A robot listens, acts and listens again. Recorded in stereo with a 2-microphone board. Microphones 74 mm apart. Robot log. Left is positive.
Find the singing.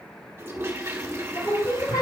note: The singing: about 75° left or 105° left.
cmd yaw +75
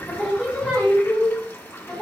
note: So it is at 10° left.
cmd yaw +10
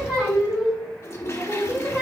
note: The singing is now 10° right.
cmd yaw -10
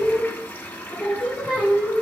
end: Facing the singing.